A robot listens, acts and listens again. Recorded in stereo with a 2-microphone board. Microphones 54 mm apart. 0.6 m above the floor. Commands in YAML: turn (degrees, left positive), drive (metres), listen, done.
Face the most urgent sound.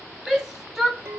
turn: -30
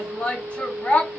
turn: 25
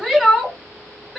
done: "Found it: a shout, straight ahead."